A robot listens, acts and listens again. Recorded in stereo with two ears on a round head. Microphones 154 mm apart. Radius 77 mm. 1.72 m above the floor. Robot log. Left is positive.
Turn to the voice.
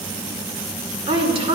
note: The woman speaking: about 35° right or 145° right.
cmd yaw -35
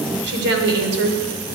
note: So it is at 105° right.
cmd yaw -105
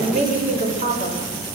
note: The woman speaking is now 40° right.
cmd yaw -40
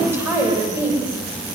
note: The woman speaking is now 15° right.
cmd yaw -15
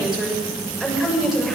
end: Found it: a woman speaking, straight ahead.